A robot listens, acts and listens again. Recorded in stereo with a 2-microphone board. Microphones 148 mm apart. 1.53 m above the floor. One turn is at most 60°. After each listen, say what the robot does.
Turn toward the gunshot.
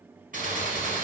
Turn 60° right.
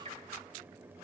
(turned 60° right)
Keep listening.
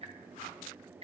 I heard a gunshot, but can't make it out now. It was about straight ahead or 60° right.